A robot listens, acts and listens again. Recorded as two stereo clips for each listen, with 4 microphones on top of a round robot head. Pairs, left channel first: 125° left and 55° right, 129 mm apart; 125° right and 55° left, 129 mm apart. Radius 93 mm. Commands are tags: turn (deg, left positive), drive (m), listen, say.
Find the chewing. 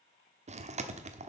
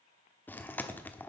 <turn deg="-50"/>
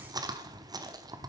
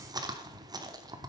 <say>Found it: chewing, straight ahead, 1 to 2 m away.</say>